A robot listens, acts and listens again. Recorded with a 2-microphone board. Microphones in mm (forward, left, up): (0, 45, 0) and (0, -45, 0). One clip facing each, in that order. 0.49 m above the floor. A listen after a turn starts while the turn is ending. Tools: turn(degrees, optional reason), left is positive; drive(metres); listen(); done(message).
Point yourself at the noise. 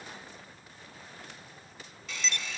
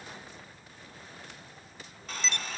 turn(degrees=-45, reason="The hair dryer: about 45° right or 135° right.")
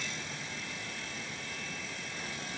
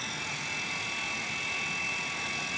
turn(degrees=-95, reason="So it is at 95° right.")
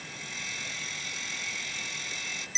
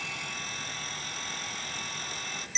turn(degrees=-45, reason="The hair dryer is now 45° right.")
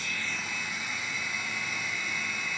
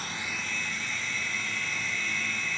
turn(degrees=10, reason="The hair dryer is now 10° left.")
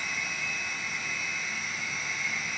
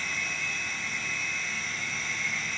done("Facing the hair dryer, 2 to 4 m away.")